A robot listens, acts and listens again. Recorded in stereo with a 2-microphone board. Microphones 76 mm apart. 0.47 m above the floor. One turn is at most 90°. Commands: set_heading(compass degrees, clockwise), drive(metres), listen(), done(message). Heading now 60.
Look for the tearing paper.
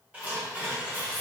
set_heading(80)
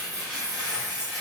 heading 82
done("Found it: tearing paper, straight ahead.")